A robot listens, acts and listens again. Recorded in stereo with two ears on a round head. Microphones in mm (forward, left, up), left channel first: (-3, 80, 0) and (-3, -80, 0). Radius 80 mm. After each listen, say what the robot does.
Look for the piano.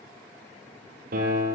Turn 55° right.
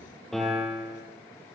Found it: a piano, straight ahead, over 4 m away.